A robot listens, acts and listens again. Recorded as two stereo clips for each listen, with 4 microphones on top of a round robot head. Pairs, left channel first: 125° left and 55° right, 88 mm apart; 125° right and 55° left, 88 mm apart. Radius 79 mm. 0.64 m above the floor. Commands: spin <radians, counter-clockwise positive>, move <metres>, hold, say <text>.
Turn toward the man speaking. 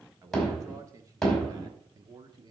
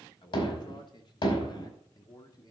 spin -1.48
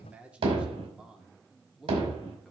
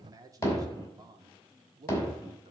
spin 0.52
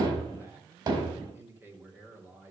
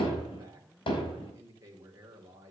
spin 0.17
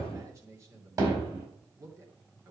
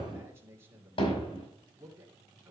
say Facing the man speaking.